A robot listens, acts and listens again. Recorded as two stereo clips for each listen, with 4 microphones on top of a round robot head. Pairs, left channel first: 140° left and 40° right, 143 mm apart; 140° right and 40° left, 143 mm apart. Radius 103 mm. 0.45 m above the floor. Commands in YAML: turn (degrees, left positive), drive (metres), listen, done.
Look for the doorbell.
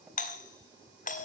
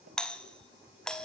turn: 135
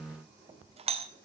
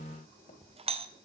done: "Facing the doorbell, 2 to 4 m away."